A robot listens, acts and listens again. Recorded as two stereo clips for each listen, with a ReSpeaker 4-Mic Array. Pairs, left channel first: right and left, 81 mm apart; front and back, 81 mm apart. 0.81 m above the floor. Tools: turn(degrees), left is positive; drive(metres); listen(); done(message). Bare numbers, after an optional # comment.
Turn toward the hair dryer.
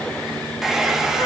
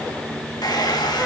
done("Facing the hair dryer, 1 to 2 m away.")